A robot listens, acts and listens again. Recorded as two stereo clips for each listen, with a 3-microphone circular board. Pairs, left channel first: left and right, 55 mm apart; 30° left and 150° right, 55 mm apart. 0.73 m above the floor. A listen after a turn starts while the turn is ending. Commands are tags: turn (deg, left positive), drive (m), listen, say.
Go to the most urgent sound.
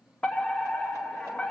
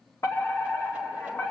<turn deg="20"/>
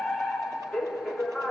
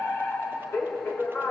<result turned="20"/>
<drive m="1.0"/>
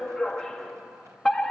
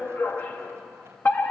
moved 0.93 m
<turn deg="15"/>
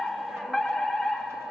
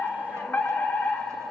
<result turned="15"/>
<drive m="1.0"/>
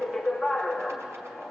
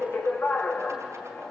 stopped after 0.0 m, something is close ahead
<say>I am next to the fire alarm.</say>